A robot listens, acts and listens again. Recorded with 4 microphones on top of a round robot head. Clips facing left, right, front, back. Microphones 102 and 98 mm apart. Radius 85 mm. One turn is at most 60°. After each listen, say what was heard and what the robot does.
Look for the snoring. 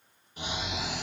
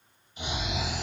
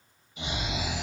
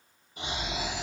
The snoring: 135° left. Turn 60° left.
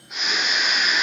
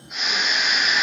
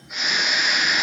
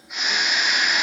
The snoring is now 90° left. Turn 60° left.
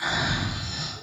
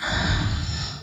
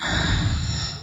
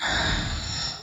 The snoring is now 55° left. Turn 55° left.
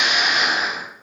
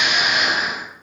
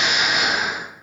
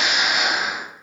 Facing the snoring.